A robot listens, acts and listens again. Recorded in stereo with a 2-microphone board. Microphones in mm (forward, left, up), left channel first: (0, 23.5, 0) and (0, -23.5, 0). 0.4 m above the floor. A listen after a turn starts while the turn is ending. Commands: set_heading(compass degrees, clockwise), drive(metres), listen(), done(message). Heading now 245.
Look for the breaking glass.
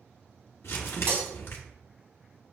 set_heading(295)
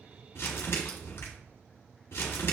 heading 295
listen()
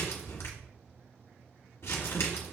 done("I heard breaking glass, but can't make it out now. It was about straight ahead or 80° right.")